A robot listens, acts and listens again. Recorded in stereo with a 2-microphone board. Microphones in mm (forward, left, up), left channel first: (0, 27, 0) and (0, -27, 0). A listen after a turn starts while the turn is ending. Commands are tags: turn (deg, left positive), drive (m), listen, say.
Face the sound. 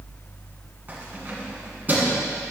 <turn deg="-35"/>
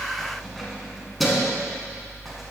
<say>Found it: keys jangling, straight ahead.</say>